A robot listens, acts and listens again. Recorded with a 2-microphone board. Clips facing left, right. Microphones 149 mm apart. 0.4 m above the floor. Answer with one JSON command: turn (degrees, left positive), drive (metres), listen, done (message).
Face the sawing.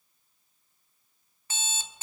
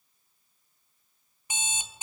{"listen": true}
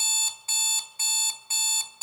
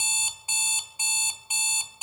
{"listen": true}
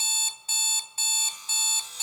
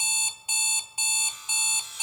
{"turn": 35}
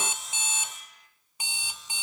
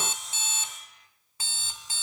{"done": "Found it: sawing, straight ahead."}